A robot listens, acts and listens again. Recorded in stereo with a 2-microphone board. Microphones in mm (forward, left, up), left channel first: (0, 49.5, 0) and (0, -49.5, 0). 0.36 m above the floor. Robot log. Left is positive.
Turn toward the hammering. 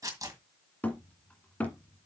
note: The hammering: about 15° left or 165° left.
cmd yaw +15
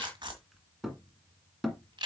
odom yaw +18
end: Found it: hammering, straight ahead.